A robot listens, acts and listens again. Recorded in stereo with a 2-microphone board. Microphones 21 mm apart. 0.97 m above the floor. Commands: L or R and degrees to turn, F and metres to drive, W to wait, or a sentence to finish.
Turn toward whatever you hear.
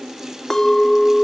L20
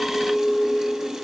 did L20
L145
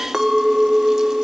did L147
Found it: a clink, straight ahead.